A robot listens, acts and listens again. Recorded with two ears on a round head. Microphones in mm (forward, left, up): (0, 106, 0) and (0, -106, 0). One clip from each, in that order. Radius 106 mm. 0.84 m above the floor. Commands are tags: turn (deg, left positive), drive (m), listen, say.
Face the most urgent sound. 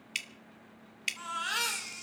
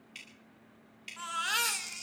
<turn deg="-20"/>
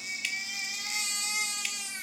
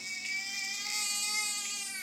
<say>Facing the baby crying, 2 to 4 m away.</say>